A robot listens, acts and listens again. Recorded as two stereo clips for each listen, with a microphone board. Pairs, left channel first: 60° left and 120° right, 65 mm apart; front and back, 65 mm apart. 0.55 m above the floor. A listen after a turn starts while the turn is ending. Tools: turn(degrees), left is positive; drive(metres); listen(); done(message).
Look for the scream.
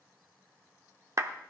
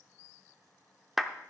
listen()
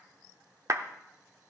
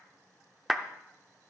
listen()
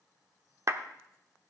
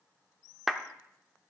done("I can't make out a scream to turn to.")